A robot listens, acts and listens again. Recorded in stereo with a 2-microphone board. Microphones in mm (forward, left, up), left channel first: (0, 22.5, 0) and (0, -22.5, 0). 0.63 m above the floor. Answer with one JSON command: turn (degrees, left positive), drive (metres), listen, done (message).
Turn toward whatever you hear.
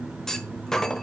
{"turn": 30}
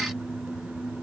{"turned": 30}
{"listen": true}
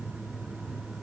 {"done": "I heard a clunk, but can't make it out now. It was about 20° right or 140° left."}